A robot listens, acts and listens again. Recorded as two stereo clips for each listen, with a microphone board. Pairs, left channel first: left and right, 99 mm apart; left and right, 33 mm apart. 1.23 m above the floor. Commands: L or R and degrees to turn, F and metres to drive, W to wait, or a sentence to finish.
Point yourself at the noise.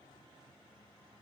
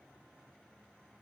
W
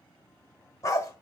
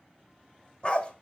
L30
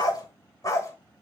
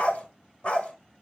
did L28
L35
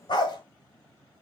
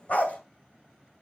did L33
L130
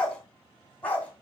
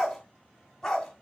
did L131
L15
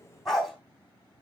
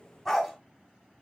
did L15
Found it: a dog barking, straight ahead.